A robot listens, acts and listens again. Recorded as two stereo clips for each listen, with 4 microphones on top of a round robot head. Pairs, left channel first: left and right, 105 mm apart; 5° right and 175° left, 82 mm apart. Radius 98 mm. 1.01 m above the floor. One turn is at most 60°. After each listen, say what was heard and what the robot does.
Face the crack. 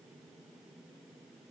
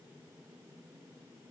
Keep listening.
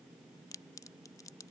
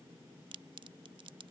The crack: 150° left. Turn 60° left.
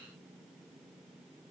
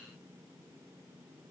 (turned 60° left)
Nothing new. It was at 90° left. Turn 60° left.
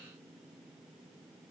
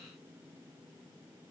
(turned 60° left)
Nothing new. It was at 30° left. Turn 30° left.
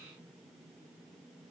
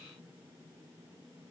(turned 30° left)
Facing where the crack came from. I can't hear it now.